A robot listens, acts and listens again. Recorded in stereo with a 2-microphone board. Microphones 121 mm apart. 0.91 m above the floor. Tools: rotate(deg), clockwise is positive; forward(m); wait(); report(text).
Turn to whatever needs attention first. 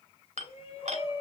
rotate(-50)
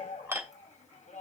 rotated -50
rotate(-75)
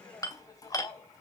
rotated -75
rotate(-30)
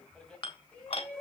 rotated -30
report("Facing the shout, over 4 m away.")